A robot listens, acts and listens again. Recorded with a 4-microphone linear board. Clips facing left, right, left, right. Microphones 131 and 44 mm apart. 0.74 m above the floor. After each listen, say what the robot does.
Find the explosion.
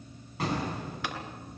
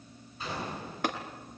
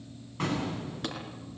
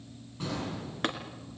Turn 90° left.
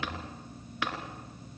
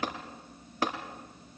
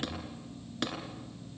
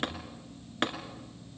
Facing where the explosion came from. I can't hear it now.